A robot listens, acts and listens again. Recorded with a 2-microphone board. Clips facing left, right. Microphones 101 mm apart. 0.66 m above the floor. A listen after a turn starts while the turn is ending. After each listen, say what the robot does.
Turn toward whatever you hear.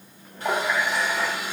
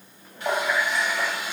Turn 40° left.
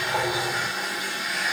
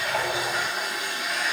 Facing the running tap.